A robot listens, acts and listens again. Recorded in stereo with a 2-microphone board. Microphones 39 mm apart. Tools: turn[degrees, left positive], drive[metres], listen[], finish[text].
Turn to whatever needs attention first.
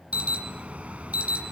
Thought: The alarm: about 35° right or 145° right.
Action: turn[-35]
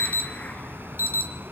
Thought: So it is at 110° right.
Action: turn[-110]
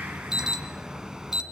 Thought: The alarm is now 20° right.
Action: turn[-20]
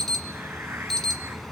Action: finish[Found it: an alarm, straight ahead, 1 to 2 m away.]